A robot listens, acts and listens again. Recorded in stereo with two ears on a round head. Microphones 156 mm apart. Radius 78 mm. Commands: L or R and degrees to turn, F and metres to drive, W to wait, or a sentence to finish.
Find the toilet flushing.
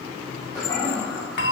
L20
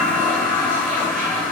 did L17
Facing the toilet flushing.